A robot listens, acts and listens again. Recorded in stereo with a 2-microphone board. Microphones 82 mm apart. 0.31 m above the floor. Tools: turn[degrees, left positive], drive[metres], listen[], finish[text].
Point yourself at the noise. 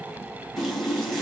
Action: turn[-30]
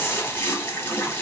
Thought: So it is at 25° left.
Action: turn[25]
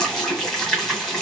Action: finish[Found it: a running tap, straight ahead.]